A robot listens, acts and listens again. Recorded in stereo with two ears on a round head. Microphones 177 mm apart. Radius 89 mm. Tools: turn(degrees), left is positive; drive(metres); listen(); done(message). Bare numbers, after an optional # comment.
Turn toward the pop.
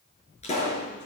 # The pop: about 35° left or 145° left.
turn(35)
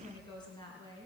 listen()
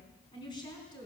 done("I heard a pop, but can't make it out now. It was about straight ahead or 110° left.")